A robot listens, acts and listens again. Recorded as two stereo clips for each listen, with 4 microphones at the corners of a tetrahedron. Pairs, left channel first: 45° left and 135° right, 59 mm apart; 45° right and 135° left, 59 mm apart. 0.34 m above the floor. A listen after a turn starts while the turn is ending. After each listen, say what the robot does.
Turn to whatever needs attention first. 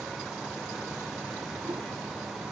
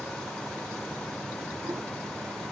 Keep listening.
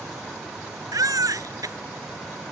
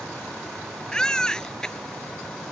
Turn 120° right.
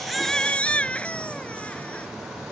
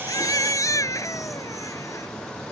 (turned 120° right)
Turn 25° right.
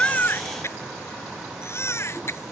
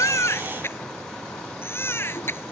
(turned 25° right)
Facing the baby crying.